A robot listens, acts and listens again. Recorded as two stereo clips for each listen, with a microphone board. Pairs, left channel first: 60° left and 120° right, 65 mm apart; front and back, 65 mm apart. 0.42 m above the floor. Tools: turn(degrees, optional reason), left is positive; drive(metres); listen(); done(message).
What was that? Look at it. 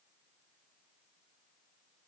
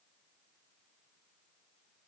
listen()
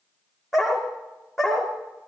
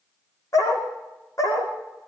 turn(degrees=-35, reason="The dog barking: 35° right.")
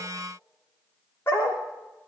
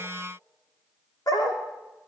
done("Found it: a dog barking, straight ahead.")